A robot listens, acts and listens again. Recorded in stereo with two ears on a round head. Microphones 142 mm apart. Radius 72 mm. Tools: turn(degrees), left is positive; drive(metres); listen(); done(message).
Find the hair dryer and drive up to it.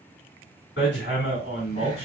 listen()
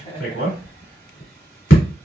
listen()
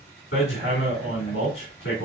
done("I can't make out a hair dryer, only laughter and hammering.")